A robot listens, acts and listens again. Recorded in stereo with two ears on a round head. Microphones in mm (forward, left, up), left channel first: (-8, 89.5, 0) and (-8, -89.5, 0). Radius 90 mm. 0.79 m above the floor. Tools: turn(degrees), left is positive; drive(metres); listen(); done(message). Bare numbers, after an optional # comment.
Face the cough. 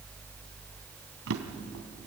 listen()
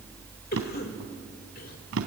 # The cough: about 50° left or 130° left.
turn(50)
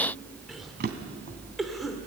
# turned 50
done("Facing the cough, 2 to 4 m away.")